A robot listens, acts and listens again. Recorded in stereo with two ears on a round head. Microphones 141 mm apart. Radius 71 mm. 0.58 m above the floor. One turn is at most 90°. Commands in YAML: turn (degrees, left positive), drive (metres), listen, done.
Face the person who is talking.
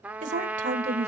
turn: -45
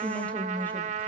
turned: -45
turn: 10
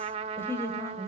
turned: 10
turn: 20
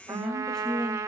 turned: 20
done: "Facing the woman speaking, 2 to 4 m away."